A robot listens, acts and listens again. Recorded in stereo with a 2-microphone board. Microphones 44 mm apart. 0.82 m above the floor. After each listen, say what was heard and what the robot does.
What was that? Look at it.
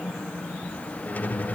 The squeak: about 40° left or 140° left. Turn 40° left.
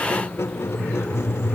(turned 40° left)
So it is at 100° left. Turn 100° left.
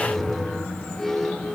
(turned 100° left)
Found it: a squeak, straight ahead, 1 to 2 m away.